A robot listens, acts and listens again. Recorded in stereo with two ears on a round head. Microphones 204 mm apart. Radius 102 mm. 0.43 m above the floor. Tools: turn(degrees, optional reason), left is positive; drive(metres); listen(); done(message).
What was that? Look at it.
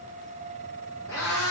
turn(degrees=15, reason="The cat meowing: about 15° left or 165° left.")
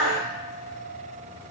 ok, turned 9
turn(degrees=30)
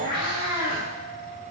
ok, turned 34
turn(degrees=-20, reason="So it is at 20° right.")
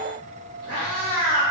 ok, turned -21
done("Facing the cat meowing, 2 to 4 m away.")